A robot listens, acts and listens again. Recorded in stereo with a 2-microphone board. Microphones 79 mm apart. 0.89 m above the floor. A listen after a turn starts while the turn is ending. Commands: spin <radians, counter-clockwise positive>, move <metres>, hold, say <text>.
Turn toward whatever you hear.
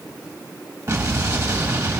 spin -0.79
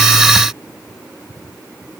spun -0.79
hold
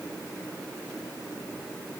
say I heard an explosion, but can't make it out now. It was about straight ahead or 90° right.